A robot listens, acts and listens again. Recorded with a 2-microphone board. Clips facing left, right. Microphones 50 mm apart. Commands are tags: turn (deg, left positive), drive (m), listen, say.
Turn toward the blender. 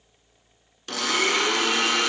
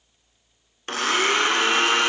<turn deg="-40"/>
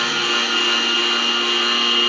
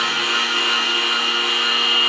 <say>Found it: a blender, straight ahead.</say>